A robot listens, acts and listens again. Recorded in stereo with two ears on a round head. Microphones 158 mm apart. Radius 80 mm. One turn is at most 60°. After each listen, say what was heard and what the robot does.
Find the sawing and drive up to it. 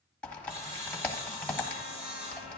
The sawing: about 40° right or 140° right. Turn 40° right.
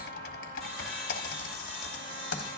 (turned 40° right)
Drive 1.0 m forward.
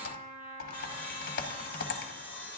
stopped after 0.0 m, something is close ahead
Blocked. The sawing is further on, straight ahead.